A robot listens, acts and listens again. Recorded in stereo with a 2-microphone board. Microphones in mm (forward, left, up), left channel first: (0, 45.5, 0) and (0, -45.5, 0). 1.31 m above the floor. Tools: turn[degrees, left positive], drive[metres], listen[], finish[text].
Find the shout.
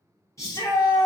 Thought: The shout: about 35° left or 145° left.
Action: turn[35]
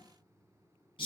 Thought: So it is at 110° left.
Action: turn[110]
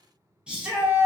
Thought: The shout is now 10° right.
Action: turn[-10]
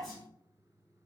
Action: listen[]
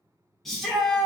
Action: finish[Found it: a shout, straight ahead.]